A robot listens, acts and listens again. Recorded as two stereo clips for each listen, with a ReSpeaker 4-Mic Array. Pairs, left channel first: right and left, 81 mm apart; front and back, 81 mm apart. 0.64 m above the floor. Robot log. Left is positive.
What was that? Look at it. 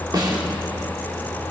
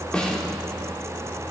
note: The snare drum: 75° left.
cmd yaw +75
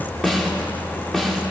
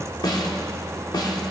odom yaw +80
end: Facing the snare drum.